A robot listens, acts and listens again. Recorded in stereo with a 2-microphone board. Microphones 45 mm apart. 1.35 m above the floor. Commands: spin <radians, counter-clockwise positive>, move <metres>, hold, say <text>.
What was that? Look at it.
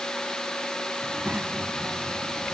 spin -0.52
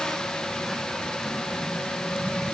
spin 0.17
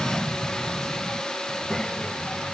spin 0.17
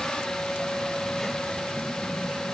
say Found it: a child speaking, straight ahead.